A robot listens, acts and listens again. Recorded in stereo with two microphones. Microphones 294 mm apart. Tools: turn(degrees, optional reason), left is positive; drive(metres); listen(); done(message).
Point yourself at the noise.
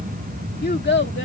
turn(degrees=35, reason="The child speaking: about 35° left or 145° left.")
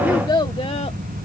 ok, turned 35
turn(degrees=15, reason="So it is at 15° left.")
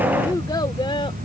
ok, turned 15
listen()
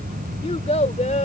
turn(degrees=25, reason="The child speaking is now 25° left.")
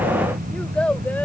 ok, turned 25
done("Facing the child speaking.")